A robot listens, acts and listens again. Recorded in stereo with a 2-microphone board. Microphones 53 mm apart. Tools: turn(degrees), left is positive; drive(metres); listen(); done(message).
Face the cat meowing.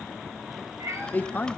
turn(degrees=-90)
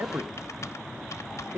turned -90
listen()
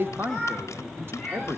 turn(degrees=10)
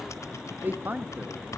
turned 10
listen()
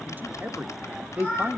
done("Found it: a cat meowing, straight ahead, over 4 m away.")